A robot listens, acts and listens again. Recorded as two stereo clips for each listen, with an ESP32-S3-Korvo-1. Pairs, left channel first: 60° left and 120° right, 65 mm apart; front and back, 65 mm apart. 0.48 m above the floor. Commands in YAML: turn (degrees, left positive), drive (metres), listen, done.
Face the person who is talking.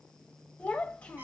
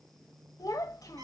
done: "Found it: a child speaking, straight ahead."